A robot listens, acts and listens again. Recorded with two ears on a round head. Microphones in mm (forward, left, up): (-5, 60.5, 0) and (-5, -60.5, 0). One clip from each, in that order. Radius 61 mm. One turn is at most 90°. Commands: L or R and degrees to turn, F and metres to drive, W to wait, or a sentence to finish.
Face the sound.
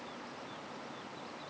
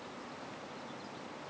W
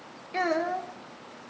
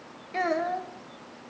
L30
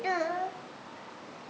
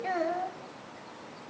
L90
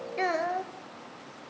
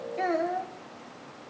L50
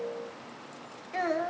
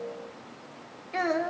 R15
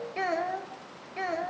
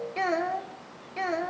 Facing the child speaking, 1 to 2 m away.